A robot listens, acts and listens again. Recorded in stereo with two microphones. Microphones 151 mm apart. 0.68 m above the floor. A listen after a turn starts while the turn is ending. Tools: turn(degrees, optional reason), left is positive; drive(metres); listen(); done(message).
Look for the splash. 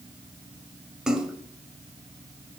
turn(degrees=-30)
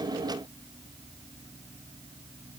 listen()
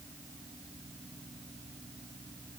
done("I heard a splash, but can't make it out now. It was about 25° left or 145° right.")